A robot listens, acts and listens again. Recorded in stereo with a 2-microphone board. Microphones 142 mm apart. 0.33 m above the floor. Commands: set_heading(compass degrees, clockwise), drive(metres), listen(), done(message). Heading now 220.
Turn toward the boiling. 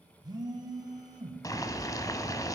set_heading(195)
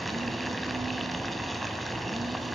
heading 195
done("Found it: boiling, straight ahead, 1 to 2 m away.")